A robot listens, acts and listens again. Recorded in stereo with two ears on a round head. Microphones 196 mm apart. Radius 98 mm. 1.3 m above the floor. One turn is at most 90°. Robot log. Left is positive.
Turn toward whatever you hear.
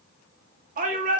note: The shout: about 35° right or 145° right.
cmd yaw -35
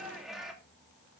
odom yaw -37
end: Found it: a shout, straight ahead, 2 to 4 m away.